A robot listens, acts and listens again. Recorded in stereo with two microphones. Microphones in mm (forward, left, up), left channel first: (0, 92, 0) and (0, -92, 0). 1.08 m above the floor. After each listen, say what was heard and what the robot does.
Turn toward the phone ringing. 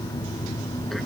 Keep listening.
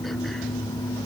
Keep listening.
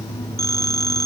The phone ringing: about 20° left or 160° left. Turn 20° left.
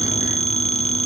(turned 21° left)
So it is at 140° left. Turn 140° left.
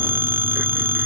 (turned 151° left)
The phone ringing is now 15° right. Turn 15° right.
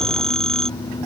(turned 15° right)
Found it: a phone ringing, straight ahead.